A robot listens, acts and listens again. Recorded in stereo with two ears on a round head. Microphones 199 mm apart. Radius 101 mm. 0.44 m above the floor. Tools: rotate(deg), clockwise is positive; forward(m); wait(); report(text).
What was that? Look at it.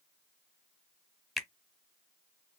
rotate(-30)
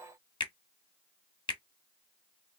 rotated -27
rotate(-155)
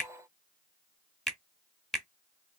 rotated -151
report("Facing the finger snap, 1 to 2 m away.")